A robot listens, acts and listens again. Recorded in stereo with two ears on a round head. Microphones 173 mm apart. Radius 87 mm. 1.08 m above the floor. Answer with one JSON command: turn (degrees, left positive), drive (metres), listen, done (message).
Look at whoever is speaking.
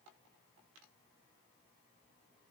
{"listen": true}
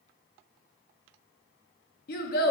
{"turn": 50}
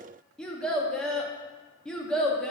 {"done": "Facing the child speaking."}